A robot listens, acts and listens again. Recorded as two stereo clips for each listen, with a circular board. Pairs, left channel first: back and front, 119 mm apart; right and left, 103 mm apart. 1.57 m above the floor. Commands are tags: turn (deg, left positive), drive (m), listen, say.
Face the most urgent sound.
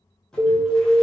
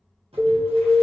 <turn deg="150"/>
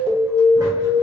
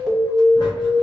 <say>Facing the alarm, 1 to 2 m away.</say>